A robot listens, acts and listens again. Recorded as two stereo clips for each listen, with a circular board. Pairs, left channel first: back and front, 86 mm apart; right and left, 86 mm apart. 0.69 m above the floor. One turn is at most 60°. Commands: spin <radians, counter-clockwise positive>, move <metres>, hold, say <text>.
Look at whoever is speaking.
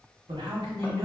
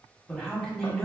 spin -0.17
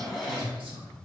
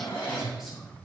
say Found it: a man speaking, straight ahead.